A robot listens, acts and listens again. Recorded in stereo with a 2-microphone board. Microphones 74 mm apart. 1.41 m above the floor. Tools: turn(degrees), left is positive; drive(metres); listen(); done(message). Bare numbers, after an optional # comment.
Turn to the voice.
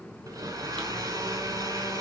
listen()
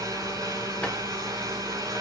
listen()
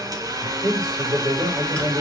# The man speaking: about 50° right or 130° right.
turn(-50)
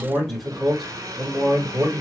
done("Found it: a man speaking, straight ahead, 2 to 4 m away.")